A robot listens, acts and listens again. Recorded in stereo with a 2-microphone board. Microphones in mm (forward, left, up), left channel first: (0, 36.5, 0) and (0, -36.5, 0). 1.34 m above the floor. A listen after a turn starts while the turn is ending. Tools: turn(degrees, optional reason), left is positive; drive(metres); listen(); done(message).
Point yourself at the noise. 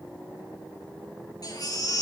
turn(degrees=60, reason="The baby crying: about 60° left or 120° left.")
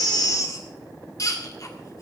turn(degrees=55, reason="So it is at 55° left.")
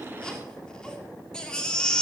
turn(degrees=10, reason="The baby crying is now 10° left.")
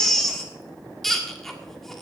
done("Facing the baby crying.")